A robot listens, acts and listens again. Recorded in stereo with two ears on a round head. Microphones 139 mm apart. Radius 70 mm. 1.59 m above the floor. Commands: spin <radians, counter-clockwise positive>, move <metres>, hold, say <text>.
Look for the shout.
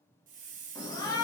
spin 0.44
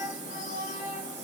spin 2.27
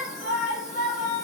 spin 0.87
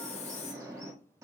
spin -0.35
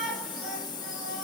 say Facing the shout, 1 to 2 m away.